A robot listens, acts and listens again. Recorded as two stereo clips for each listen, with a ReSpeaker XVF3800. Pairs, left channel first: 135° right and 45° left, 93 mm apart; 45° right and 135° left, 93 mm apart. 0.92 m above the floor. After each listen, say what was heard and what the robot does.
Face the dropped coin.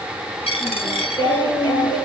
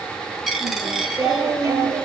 The dropped coin: 135° right. Turn 135° right.
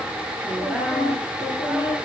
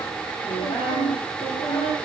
Facing where the dropped coin came from. I can't hear it now.